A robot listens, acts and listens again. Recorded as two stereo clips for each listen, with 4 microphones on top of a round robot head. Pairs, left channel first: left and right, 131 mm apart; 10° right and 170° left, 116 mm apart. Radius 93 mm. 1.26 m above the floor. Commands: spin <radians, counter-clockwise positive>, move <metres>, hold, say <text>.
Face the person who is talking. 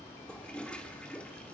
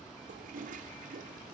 hold
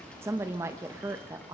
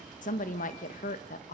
spin -0.26
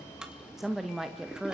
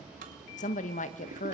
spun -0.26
say Found it: a woman speaking, straight ahead.